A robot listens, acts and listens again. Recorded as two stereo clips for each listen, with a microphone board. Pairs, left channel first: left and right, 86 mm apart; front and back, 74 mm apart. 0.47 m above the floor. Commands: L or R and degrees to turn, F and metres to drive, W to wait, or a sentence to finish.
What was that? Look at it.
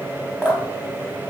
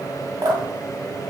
R170
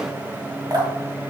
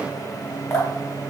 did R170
R50
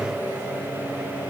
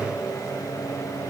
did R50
W
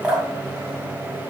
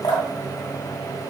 R15
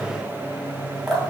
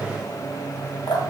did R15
Facing the dripping.